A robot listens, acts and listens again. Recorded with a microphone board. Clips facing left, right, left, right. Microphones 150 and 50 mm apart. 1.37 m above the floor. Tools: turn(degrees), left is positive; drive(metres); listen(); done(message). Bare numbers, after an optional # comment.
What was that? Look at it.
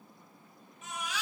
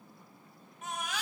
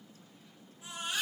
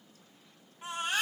# The baby crying: about 50° right or 130° right.
turn(-50)
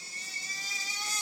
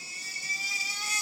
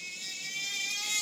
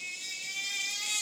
done("Facing the baby crying, 2 to 4 m away.")